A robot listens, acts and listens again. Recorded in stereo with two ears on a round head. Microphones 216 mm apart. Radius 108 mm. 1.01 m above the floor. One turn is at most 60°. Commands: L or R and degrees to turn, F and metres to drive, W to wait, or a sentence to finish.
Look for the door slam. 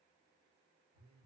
W
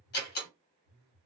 L45
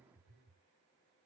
W
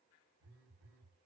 I heard a door slam, but can't make it out now. It was about straight ahead or 90° left.